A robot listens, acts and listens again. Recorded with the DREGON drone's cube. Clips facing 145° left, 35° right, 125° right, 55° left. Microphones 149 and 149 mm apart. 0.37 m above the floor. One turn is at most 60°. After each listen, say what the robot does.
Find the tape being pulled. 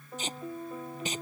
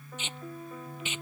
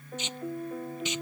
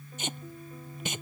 Turn 60° left.
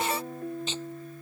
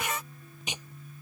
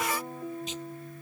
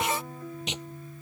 Turn 40° left.
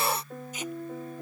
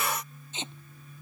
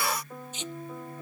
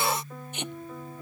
Turn 30° left.
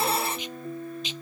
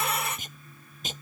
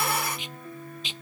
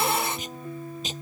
Turn 10° left.
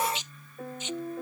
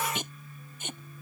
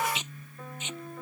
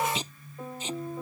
Facing the tape being pulled.